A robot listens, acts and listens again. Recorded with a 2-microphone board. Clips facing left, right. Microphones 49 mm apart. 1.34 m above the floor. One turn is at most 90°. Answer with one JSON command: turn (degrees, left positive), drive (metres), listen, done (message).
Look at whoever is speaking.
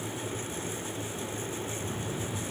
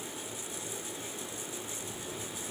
{"listen": true}
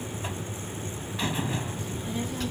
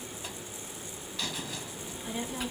{"turn": -30}
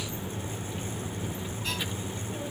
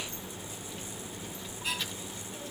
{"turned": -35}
{"turn": 20}
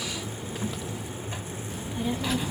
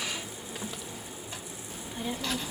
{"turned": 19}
{"done": "Facing the child speaking."}